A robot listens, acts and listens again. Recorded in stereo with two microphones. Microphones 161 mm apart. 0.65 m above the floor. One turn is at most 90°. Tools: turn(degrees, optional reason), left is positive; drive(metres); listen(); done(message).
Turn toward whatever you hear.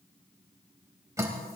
turn(degrees=-20, reason="The dripping: about 20° right or 160° right.")
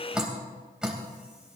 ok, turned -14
done("Facing the dripping, 2 to 4 m away.")